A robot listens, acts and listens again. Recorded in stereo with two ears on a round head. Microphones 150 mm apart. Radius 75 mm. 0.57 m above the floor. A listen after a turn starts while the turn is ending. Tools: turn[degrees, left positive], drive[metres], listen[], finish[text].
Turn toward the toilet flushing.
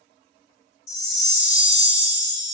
Action: listen[]
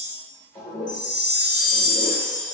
Thought: The toilet flushing: about 25° left or 155° left.
Action: turn[25]
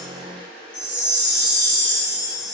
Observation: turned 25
Action: finish[Facing the toilet flushing.]